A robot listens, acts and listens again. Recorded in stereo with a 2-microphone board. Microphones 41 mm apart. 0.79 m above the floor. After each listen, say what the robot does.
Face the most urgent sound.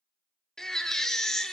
Turn 30° left.
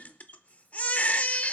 Turn 140° left.
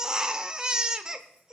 Turn 20° right.
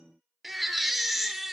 Found it: a baby crying, straight ahead, under 1 m away.